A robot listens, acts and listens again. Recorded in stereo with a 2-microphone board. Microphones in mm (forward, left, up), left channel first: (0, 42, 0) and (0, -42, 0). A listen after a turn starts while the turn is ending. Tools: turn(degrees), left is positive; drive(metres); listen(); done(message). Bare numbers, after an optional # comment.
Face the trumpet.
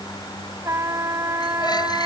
# The trumpet: about 35° right or 145° right.
turn(-35)
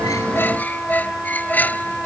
done("Facing the trumpet.")